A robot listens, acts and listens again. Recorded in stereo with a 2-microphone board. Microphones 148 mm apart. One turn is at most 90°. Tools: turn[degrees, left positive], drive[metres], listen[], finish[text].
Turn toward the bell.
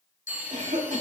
Thought: The bell: about 70° left or 110° left.
Action: turn[70]
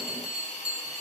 Action: finish[Facing the bell.]